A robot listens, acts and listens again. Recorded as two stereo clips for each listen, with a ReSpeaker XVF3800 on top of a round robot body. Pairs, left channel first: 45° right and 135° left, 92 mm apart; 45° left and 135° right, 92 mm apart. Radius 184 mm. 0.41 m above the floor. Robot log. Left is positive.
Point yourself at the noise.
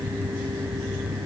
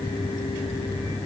cmd idle
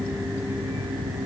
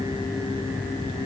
cmd idle
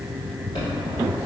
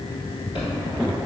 end: Facing the chime.